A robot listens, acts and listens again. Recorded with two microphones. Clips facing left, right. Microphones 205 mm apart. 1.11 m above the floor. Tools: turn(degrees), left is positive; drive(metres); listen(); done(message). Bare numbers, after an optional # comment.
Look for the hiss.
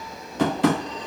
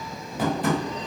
listen()
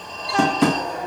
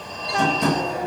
listen()
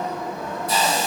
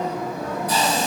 # The hiss: about 25° left or 155° left.
turn(25)
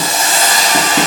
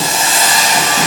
# So it is at 125° left.
turn(125)
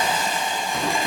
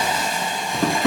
done("Facing the hiss, 2 to 4 m away.")